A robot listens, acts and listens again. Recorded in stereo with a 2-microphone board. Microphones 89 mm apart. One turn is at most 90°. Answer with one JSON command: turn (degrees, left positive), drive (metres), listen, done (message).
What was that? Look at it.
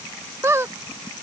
{"turn": -30}
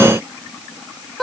{"done": "Found it: a squeak, straight ahead."}